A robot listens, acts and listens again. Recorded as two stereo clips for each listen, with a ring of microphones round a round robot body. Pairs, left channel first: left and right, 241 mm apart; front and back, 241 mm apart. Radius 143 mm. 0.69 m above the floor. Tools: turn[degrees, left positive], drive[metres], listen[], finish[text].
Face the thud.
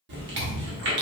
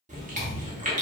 Thought: The thud: 95° right.
Action: turn[-95]
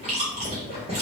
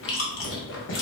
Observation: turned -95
Action: finish[Facing where the thud came from. I can't hear it now.]